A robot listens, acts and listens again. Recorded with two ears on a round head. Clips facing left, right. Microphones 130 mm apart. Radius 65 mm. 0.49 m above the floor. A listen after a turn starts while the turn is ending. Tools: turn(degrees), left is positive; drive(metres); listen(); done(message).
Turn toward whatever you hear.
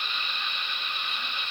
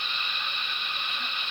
listen()
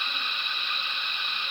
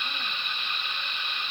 listen()
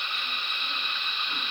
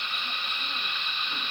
done("I can't make out anything.")